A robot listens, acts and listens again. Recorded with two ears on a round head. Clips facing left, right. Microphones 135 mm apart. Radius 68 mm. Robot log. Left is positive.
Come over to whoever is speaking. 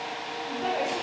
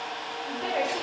note: The woman speaking: about 20° right or 160° right.
cmd yaw -20
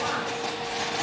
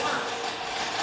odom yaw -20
cmd idle
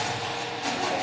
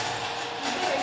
cmd idle
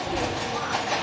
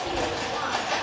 end: I heard a woman speaking, but can't make it out now. It was about straight ahead or 140° right. I did not reach it.